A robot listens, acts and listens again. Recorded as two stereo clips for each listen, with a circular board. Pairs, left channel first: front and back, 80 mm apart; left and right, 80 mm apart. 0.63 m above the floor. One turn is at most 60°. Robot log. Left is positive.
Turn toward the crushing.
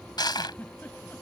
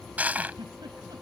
note: The crushing: 20° right.
cmd yaw -20
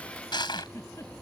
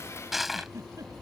end: Facing the crushing.